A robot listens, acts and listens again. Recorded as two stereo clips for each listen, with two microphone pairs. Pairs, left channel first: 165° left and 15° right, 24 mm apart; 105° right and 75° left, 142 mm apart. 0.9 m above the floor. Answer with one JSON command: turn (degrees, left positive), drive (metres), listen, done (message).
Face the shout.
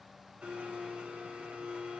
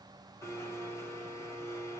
{"listen": true}
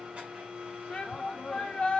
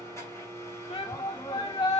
{"turn": -155}
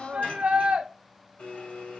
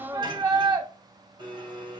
{"turn": 15}
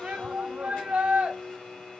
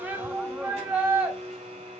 {"done": "Facing the shout."}